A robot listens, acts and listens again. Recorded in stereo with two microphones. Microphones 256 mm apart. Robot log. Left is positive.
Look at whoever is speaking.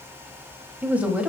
cmd yaw -30
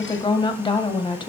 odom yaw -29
note: So it is at 20° left.
cmd yaw +20
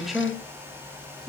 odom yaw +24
end: Found it: a woman speaking, straight ahead, 1 to 2 m away.